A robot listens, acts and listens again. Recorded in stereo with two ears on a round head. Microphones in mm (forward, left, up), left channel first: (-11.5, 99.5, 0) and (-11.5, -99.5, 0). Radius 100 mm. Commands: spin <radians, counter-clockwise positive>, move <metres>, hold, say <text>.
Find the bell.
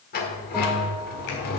spin 0.52
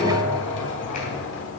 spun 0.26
spin -0.17
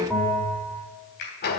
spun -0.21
say Found it: a bell, straight ahead, 2 to 4 m away.